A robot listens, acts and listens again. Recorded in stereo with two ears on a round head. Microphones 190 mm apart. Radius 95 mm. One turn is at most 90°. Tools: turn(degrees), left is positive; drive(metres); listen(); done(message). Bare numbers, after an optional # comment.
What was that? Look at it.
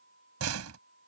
turn(-90)
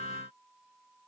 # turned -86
done("Facing where the door slam came from. I can't hear it now.")